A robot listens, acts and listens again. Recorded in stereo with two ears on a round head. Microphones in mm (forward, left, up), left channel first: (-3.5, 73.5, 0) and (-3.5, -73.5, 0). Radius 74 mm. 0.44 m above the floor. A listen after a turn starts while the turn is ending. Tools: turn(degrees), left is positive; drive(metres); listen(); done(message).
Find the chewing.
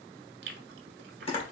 turn(degrees=-65)
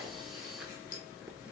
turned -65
listen()
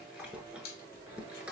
turn(degrees=-10)
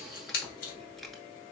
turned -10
done("Found it: chewing, straight ahead.")